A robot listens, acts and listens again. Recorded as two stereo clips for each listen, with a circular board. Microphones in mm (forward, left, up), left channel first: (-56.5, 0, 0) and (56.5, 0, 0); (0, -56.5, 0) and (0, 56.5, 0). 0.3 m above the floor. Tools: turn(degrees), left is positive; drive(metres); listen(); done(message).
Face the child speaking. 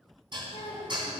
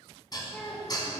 turn(degrees=-175)
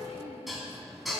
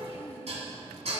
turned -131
turn(degrees=-65)
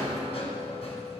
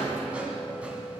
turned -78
turn(degrees=15)
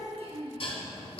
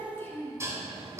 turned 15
turn(degrees=-25)
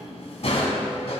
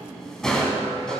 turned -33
turn(degrees=10)
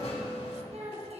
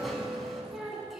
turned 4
done("Found it: a child speaking, straight ahead, 2 to 4 m away.")